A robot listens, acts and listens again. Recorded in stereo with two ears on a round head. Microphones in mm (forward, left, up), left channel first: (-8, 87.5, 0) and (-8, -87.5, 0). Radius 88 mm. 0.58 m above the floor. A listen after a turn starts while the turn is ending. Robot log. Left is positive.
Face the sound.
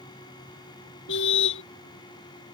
note: The car horn: about 70° left or 110° left.
cmd yaw +70
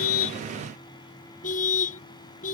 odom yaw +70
note: So it is at 40° left.
cmd yaw +40
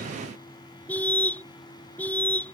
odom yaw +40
note: The car horn is now 10° left.
cmd yaw +10
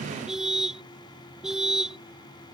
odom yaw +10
end: Facing the car horn.